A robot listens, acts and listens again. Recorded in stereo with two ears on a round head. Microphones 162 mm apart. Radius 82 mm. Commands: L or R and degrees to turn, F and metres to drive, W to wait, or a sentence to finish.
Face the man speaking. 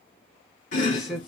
R30
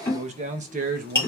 R130
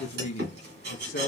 L50
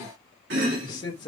L25
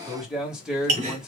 Facing the man speaking, 1 to 2 m away.